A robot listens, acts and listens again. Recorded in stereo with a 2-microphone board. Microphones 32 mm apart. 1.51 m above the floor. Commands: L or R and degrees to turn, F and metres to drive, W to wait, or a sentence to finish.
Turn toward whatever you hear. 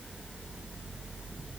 W
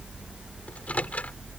L50
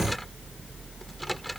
Found it: a microwave, straight ahead.